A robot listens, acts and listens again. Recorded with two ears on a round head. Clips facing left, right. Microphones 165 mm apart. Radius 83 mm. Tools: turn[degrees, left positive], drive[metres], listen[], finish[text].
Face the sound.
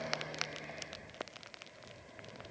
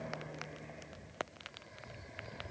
Action: listen[]
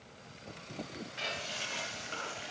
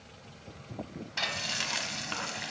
Action: turn[-90]
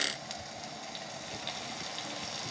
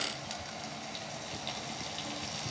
Action: finish[Facing the frying.]